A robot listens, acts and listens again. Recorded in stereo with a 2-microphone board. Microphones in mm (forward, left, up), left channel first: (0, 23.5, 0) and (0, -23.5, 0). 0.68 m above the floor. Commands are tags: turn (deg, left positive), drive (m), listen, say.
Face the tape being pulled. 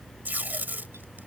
<turn deg="-45"/>
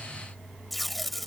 <say>Found it: tape being pulled, straight ahead.</say>